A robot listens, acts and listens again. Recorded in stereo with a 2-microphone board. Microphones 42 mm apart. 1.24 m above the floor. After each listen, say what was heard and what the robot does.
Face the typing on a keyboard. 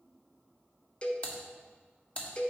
The typing on a keyboard: about 30° left or 150° left. Turn 30° left.
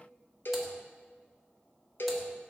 Keep listening.
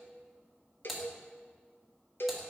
Found it: typing on a keyboard, straight ahead, 1 to 2 m away.